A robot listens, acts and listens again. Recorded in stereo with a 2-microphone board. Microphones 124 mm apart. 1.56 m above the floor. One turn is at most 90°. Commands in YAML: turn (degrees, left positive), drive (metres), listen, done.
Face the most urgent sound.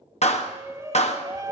turn: -25
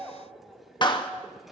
done: "Found it: a shout, straight ahead."